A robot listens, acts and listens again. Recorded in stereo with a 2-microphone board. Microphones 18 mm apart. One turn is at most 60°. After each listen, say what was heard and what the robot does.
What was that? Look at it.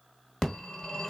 The phone ringing: about 30° left or 150° left. Turn 30° left.
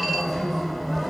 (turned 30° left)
Found it: a phone ringing, straight ahead, 1 to 2 m away.